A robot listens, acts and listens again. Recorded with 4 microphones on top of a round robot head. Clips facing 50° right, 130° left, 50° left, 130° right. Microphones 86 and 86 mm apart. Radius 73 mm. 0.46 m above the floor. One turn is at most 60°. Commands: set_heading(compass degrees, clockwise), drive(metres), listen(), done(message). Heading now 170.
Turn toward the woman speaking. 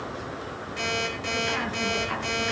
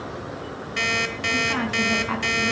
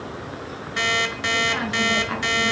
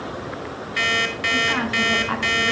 set_heading(110)
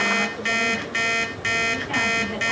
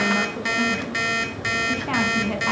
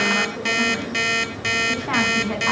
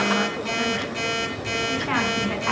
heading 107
set_heading(47)
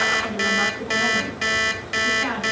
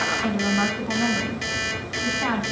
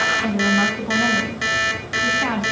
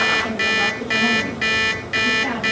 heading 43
set_heading(343)
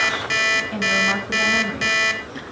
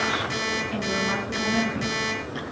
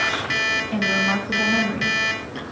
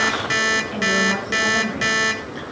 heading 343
set_heading(333)
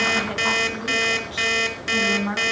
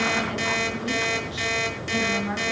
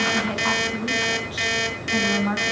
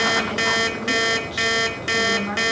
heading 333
done("Facing the woman speaking, over 4 m away.")